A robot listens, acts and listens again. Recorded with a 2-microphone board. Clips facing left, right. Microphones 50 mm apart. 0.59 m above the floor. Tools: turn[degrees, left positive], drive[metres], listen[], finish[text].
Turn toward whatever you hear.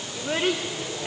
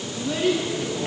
Thought: The child speaking: about 55° left or 125° left.
Action: turn[55]
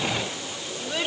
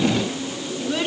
Action: finish[Found it: a child speaking, straight ahead, 1 to 2 m away.]